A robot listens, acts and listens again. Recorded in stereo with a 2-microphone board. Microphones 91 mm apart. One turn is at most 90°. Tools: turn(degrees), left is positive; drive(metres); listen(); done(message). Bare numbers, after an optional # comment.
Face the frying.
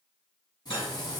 # The frying: about 50° left or 130° left.
turn(50)
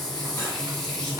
done("Found it: frying, straight ahead, 1 to 2 m away.")